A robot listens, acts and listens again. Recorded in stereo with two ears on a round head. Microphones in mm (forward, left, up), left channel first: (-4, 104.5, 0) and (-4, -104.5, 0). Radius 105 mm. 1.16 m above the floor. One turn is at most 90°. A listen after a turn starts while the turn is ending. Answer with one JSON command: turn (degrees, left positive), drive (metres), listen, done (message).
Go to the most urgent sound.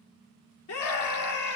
{"turn": 70}
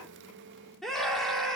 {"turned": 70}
{"drive": 1.0}
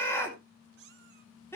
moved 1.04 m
{"turn": 10}
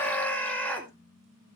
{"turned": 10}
{"drive": 1.0}
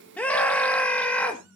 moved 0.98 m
{"drive": 1.0}
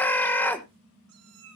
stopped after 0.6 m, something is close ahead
{"turn": 10}
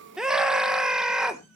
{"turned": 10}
{"done": "Arrived at the scream, straight ahead."}